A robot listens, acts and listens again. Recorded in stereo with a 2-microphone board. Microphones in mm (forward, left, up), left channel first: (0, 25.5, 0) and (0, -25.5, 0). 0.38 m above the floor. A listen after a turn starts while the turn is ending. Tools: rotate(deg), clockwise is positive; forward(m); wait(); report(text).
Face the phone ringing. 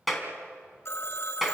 rotate(-65)
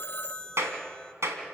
rotate(-30)
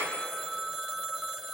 report("Facing the phone ringing.")